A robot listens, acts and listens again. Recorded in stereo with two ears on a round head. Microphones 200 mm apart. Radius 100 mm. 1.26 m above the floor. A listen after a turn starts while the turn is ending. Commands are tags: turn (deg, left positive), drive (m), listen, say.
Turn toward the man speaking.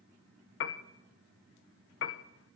<listen/>
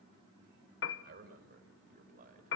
<turn deg="-40"/>
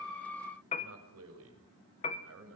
<turn deg="-115"/>
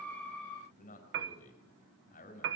<turn deg="35"/>
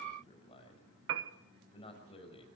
<turn deg="25"/>
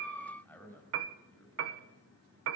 <turn deg="10"/>
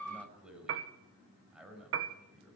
<say>Facing the man speaking.</say>